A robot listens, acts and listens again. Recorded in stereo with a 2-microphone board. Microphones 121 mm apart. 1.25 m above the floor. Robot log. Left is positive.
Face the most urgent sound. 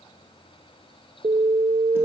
note: The alarm: about 75° right or 105° right.
cmd yaw -75
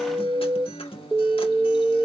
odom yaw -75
note: So it is at 15° right.
cmd yaw -15
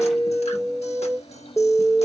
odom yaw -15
end: Found it: an alarm, straight ahead.